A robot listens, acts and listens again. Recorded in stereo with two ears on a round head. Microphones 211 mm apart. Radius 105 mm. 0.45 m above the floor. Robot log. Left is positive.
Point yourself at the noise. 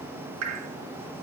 note: The dripping: about 70° right or 110° right.
cmd yaw -70
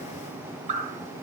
note: So it is at 30° right.
cmd yaw -30
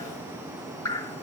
note: The dripping is now 15° left.
cmd yaw +15
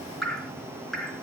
end: Found it: dripping, straight ahead, 1 to 2 m away.